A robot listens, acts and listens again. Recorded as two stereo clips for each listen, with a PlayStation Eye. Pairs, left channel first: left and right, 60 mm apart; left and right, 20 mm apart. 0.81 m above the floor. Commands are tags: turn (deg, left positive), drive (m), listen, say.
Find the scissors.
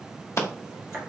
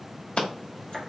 <turn deg="55"/>
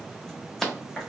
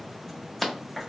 <say>Facing the scissors, 1 to 2 m away.</say>